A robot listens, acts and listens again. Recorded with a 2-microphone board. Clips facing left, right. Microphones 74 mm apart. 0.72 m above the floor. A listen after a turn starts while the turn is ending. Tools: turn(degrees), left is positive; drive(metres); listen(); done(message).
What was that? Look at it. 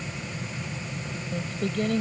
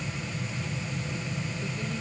turn(degrees=90)
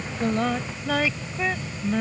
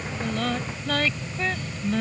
turn(degrees=10)
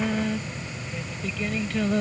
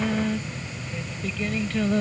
done("Found it: singing, straight ahead.")